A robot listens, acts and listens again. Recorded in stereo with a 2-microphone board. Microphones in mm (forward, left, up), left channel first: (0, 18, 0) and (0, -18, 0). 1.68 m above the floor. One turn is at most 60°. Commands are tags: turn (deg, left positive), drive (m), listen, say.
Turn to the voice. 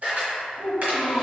<turn deg="-60"/>
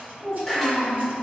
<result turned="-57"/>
<turn deg="-50"/>
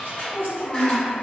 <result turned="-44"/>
<say>Found it: a child speaking, straight ahead.</say>